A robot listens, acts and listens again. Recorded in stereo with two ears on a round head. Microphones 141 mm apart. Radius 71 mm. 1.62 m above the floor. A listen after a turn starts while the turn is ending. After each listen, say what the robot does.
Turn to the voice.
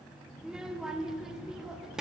Turn 30° right.
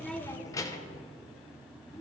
Turn 25° left.
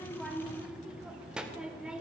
Facing the child speaking.